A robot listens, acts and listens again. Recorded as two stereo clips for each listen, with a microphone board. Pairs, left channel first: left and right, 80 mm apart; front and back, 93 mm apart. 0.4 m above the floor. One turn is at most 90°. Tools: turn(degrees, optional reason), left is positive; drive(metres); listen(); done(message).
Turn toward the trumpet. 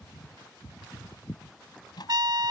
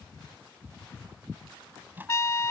turn(degrees=-60, reason="The trumpet: 60° right.")
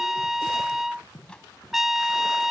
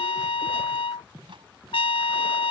done("Found it: a trumpet, straight ahead.")